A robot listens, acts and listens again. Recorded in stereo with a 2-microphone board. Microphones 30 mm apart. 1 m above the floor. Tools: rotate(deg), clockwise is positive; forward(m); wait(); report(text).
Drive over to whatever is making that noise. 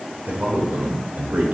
rotate(60)
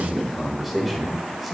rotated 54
forward(1.0)
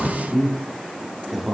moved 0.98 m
forward(1.0)
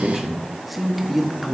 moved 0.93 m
forward(1.0)
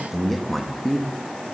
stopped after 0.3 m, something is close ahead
report("I am next to the man speaking.")